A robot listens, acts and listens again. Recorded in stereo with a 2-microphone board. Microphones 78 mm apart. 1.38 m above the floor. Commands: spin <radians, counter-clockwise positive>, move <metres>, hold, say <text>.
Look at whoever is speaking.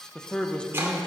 spin 0.52
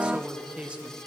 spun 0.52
spin -0.26
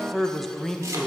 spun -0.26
say Found it: a man speaking, straight ahead.